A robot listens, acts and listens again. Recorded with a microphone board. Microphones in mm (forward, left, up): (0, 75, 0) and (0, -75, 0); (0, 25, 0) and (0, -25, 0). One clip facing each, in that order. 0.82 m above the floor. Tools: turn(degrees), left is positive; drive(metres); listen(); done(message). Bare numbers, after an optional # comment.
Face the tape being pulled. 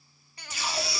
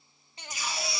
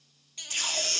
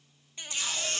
# The tape being pulled: about 65° left or 115° left.
turn(65)
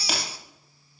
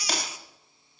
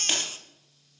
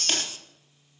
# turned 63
listen()
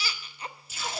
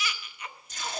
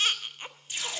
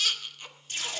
done("Facing the tape being pulled.")